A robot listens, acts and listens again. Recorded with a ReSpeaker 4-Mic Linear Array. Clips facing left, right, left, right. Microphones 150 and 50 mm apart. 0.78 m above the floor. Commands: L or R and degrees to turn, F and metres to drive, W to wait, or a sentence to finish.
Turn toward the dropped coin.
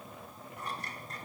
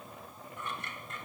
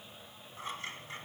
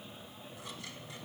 W
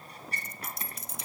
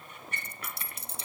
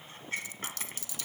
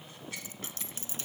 R30
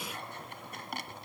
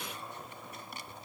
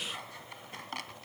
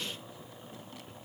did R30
W
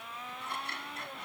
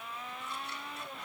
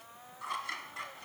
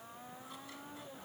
I heard a dropped coin, but can't make it out now. It was about straight ahead or 120° right.